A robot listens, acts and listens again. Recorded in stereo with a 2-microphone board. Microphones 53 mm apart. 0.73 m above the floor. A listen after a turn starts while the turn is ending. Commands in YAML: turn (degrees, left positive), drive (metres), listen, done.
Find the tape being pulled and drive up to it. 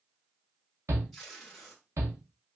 turn: 30
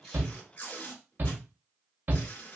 turn: 140
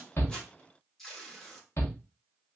drive: 1.0
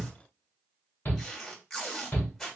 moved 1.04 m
turn: 15
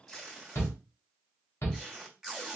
drive: 1.0
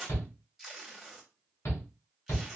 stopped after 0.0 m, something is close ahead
turn: -10
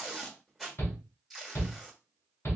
done: "I am next to the tape being pulled."